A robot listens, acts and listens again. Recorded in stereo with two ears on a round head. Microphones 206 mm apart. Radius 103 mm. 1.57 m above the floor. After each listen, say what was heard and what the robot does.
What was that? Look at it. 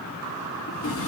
The drawer: about 60° left or 120° left. Turn 60° left.
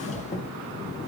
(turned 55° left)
So it is at 30° left. Turn 30° left.
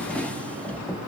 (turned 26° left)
Facing the drawer.